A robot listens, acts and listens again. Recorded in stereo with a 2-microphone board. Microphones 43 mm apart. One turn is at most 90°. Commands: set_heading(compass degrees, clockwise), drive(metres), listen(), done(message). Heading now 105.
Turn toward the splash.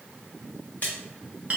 set_heading(55)
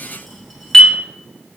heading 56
listen()
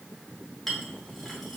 done("I heard a splash, but can't make it out now. It was about straight ahead or 85° left.")